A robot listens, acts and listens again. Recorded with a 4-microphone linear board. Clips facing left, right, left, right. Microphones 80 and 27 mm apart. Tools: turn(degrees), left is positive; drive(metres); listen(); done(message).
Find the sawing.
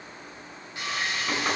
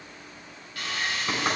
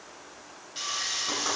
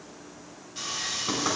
turn(degrees=25)
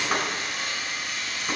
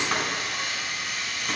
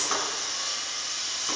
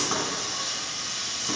done("Facing the sawing.")